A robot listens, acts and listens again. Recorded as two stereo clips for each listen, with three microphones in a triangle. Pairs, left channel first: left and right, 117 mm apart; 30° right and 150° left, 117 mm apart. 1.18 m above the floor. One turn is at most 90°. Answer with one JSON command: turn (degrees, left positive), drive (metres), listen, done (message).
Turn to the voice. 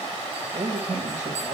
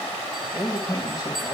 {"turn": -85}
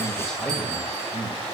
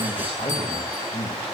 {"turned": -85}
{"done": "Found it: a man speaking, straight ahead."}